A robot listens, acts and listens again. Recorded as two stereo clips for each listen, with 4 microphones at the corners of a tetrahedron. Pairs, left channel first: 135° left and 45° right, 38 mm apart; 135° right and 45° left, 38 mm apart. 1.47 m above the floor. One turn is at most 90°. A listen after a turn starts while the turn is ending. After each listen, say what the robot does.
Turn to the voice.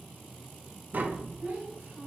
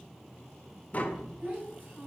Facing the child speaking.